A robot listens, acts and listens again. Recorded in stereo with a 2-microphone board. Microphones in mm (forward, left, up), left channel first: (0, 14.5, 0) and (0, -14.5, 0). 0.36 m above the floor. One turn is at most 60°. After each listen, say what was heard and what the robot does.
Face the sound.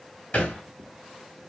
The thud: about 50° left or 130° left. Turn 50° left.
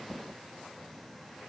Keep listening.
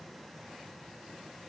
I heard a thud, but can't make it out now. It was about straight ahead or 80° left.